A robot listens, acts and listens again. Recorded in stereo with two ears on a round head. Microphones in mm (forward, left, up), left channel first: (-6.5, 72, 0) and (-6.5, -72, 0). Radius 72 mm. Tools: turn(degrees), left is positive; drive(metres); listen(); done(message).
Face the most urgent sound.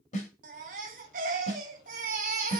turn(degrees=-55)
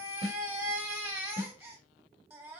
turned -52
turn(degrees=-15)
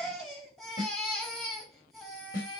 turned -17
done("Found it: a baby crying, straight ahead, 1 to 2 m away.")